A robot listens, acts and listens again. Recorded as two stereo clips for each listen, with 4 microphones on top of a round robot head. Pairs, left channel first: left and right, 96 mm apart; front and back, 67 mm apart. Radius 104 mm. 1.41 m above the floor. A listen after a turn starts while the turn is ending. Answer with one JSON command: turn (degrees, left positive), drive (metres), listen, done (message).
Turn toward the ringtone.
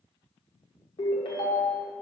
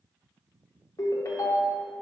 {"turn": 40}
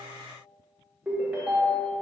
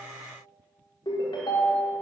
{"turn": -10}
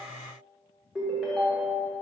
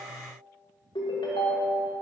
{"done": "Found it: a ringtone, straight ahead."}